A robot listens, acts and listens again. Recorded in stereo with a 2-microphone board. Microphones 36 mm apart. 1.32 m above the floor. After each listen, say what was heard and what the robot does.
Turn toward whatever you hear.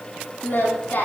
Turn 90° left.
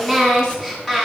So it is at 15° left. Turn 15° left.
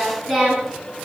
Found it: singing, straight ahead.